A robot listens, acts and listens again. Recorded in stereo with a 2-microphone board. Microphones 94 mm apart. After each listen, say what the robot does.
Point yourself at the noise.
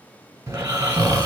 Turn 35° right.
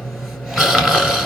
Found it: snoring, straight ahead.